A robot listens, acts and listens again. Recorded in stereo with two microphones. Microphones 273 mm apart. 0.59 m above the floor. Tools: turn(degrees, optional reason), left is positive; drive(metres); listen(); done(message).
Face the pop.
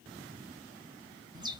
listen()
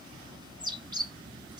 listen()
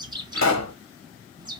turn(degrees=90)
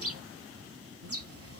done("I heard a pop from this way, but can't make it out now.")